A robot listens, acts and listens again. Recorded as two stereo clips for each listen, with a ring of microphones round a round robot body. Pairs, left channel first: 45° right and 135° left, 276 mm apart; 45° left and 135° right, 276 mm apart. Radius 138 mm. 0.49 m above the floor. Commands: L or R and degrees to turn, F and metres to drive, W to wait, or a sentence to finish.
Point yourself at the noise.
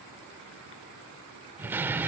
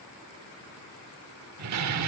R145
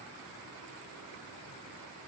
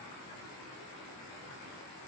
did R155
L10
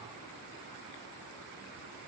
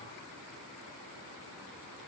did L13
Facing where the door slam came from. I can't hear it now.